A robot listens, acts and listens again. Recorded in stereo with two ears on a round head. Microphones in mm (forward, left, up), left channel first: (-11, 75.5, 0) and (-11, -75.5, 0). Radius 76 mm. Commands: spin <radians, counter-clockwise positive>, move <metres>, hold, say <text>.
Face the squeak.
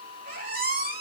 spin -0.96
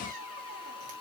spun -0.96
spin -0.96
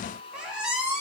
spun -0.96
say Facing the squeak, 2 to 4 m away.